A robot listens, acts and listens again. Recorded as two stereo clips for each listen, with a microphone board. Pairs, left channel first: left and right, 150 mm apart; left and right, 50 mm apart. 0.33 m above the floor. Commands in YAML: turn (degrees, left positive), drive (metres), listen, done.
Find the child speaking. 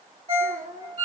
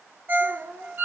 turn: -65
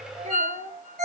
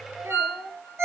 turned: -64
turn: -55
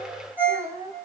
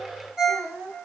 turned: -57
turn: -25
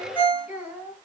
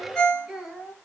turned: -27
turn: -10
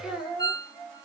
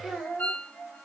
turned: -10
turn: -10
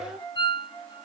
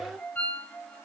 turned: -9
done: "Facing the child speaking."